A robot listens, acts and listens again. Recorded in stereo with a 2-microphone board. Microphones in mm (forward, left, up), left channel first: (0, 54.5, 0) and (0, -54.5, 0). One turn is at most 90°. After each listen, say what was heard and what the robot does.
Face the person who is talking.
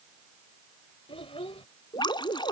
The child speaking: about 60° left or 120° left. Turn 60° left.
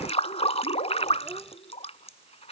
Facing the child speaking.